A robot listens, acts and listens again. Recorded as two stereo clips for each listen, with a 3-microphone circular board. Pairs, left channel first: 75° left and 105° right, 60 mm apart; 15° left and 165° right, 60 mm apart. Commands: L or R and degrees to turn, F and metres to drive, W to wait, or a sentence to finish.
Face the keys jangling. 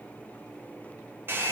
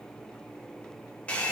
W
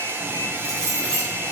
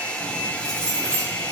L145
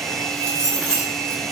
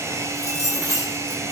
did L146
Found it: keys jangling, straight ahead.